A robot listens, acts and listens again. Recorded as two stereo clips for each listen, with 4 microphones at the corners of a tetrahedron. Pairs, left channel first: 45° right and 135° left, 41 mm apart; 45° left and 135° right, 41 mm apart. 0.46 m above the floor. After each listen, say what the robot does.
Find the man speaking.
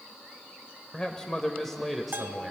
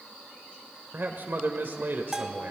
Turn 145° right.
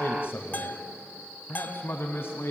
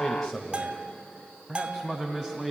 Turn 50° right.
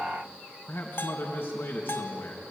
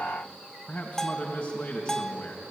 Turn 15° right.
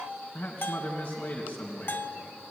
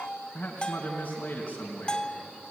Found it: a man speaking, straight ahead, 2 to 4 m away.